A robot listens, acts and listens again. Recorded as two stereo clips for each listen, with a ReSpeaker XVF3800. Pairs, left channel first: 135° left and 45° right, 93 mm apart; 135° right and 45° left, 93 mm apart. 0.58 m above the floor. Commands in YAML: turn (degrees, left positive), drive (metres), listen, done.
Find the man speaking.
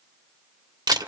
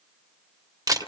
listen: true
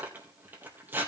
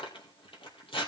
listen: true
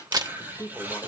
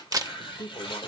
turn: -175
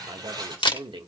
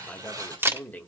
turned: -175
turn: -65
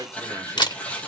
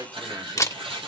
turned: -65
listen: true
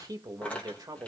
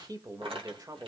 done: "Facing the man speaking, 1 to 2 m away."